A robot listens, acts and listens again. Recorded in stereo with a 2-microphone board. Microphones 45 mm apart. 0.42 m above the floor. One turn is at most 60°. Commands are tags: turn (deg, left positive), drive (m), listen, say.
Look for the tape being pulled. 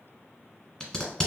<turn deg="20"/>
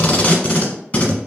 <turn deg="60"/>
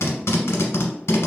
<turn deg="60"/>
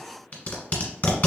<turn deg="30"/>
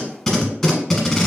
<say>Found it: tape being pulled, straight ahead, 1 to 2 m away.</say>